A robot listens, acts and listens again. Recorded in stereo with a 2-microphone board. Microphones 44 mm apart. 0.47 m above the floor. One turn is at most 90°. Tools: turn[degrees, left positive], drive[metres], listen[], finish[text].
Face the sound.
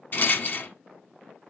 Thought: The rattle: about 45° left or 135° left.
Action: turn[45]
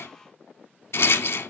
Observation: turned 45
Thought: So it is at 90° left.
Action: turn[90]
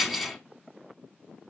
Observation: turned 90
Action: finish[Facing the rattle, under 1 m away.]